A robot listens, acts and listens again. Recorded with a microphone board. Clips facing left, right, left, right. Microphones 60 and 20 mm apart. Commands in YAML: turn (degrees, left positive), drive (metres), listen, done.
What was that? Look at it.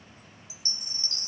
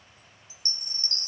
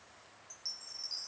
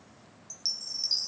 turn: -45
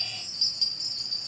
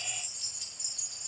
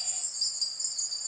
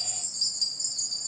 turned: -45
turn: -15
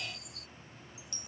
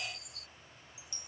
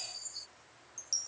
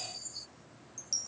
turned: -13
done: "Found it: a chime, straight ahead."